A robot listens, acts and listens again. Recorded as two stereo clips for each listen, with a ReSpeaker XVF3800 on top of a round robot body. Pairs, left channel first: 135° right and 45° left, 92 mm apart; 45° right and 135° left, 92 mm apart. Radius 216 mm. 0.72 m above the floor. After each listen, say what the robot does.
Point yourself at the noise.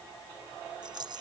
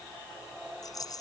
Found it: a rattle, straight ahead.